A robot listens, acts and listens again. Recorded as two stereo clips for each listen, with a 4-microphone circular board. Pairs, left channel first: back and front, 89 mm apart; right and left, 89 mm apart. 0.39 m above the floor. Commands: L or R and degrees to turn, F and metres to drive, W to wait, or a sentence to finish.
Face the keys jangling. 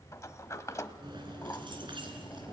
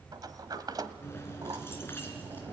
R25
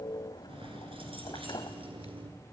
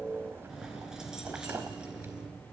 L10
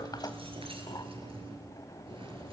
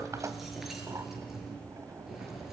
Facing the keys jangling.